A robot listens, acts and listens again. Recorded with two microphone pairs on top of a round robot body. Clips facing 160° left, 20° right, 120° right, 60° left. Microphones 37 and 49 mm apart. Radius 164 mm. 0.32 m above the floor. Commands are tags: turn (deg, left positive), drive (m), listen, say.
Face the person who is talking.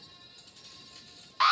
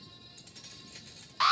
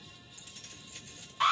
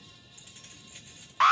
<listen/>
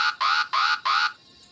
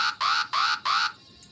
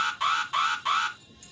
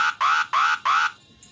<listen/>
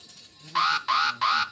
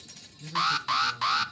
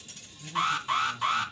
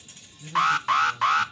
<turn deg="35"/>
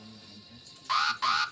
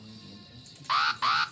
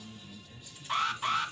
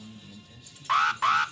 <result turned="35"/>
<turn deg="10"/>
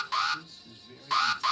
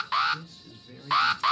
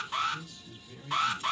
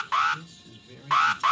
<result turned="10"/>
<say>Found it: a man speaking, straight ahead, over 4 m away.</say>